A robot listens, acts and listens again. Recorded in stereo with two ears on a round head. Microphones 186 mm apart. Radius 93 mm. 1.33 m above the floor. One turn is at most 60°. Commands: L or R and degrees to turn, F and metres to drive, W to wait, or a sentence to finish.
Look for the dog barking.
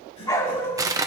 L30
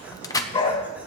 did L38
L60
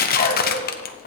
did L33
L60
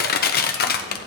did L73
L60
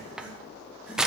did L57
L10
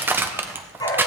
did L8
L20
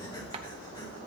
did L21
W
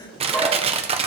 W
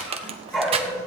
Found it: a dog barking, straight ahead, 2 to 4 m away.